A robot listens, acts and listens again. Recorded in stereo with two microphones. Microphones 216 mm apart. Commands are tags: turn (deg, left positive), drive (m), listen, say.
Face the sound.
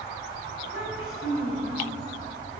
<turn deg="90"/>
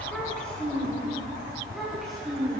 <say>Found it: a child speaking, straight ahead.</say>